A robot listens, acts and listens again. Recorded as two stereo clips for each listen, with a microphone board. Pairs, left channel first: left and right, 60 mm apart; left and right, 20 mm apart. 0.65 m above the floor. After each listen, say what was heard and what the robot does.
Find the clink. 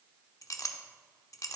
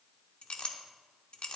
The clink: about 65° left or 115° left. Turn 65° left.
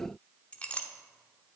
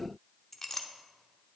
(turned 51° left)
So it is at 20° left. Turn 20° left.
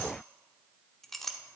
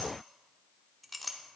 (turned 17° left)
Found it: a clink, straight ahead.